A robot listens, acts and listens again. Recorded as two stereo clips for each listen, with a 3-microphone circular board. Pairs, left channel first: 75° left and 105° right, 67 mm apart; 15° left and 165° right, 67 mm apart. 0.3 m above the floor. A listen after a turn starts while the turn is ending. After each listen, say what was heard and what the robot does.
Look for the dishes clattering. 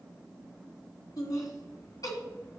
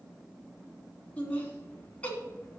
Keep listening.
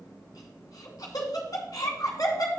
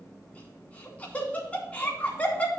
Keep listening.
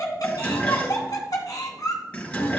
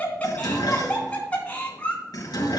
Facing the dishes clattering.